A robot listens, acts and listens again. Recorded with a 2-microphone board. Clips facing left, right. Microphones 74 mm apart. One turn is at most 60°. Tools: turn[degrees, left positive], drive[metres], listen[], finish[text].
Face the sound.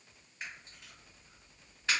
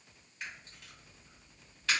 Thought: The camera shutter: about 20° left or 160° left.
Action: turn[20]
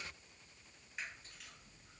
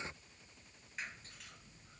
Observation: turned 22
Action: listen[]
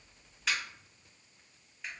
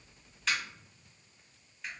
Action: finish[Found it: a camera shutter, straight ahead, 1 to 2 m away.]